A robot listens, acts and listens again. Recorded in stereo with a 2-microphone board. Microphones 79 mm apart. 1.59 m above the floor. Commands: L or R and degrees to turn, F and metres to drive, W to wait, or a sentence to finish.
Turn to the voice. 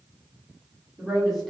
L30
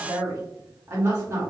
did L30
R30
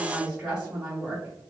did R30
R15
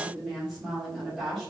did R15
Facing the woman speaking.